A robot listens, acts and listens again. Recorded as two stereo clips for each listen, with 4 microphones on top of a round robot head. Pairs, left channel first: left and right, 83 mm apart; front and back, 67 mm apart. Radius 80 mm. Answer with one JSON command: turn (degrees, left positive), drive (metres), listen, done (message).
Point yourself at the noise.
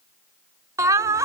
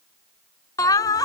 {"turn": -35}
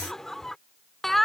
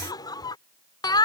{"done": "Facing the laughter."}